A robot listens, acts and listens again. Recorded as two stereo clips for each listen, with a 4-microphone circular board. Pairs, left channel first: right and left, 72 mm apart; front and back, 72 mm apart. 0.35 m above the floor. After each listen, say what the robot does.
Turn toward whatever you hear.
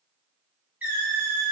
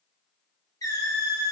Turn 30° left.
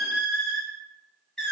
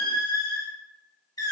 Found it: a squeak, straight ahead.